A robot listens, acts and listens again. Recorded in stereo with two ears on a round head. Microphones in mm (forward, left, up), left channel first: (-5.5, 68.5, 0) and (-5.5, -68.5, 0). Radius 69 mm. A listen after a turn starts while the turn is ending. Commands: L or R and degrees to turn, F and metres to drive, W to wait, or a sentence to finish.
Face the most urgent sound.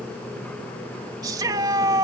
R25
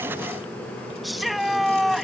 Found it: a shout, straight ahead.